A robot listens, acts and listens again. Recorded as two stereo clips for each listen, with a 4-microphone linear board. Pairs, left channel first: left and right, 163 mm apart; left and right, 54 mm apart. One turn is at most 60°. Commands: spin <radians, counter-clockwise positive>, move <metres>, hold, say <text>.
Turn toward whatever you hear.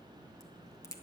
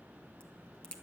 spin 0.35
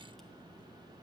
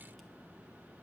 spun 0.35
hold
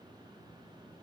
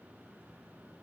say I heard a crack, but can't make it out now. It was about straight ahead or 140° left.